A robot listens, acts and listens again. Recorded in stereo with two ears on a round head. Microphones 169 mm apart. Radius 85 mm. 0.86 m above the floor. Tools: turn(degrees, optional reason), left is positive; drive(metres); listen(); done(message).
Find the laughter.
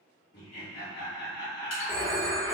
turn(degrees=60, reason="The laughter: about 60° left or 120° left.")
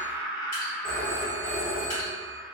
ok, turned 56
done("Facing the laughter.")